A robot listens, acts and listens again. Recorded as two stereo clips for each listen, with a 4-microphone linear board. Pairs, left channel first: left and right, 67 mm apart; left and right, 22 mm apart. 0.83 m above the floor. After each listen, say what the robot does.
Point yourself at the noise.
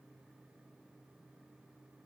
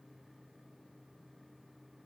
Keep listening.
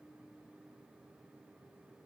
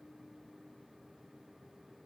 Keep listening.
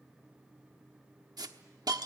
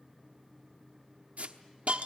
Turn 90° right.
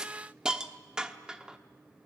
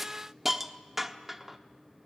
Turn 10° right.
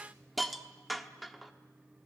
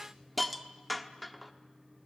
Found it: a hiss, straight ahead.